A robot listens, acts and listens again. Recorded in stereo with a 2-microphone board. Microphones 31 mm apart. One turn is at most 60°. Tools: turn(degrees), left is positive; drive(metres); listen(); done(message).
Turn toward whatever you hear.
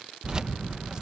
turn(degrees=-25)
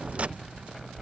turn(degrees=-60)
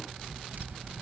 turn(degrees=-60)
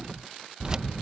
turn(degrees=-25)
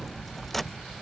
turn(degrees=10)
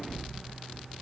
done("Found it: keys jangling, straight ahead.")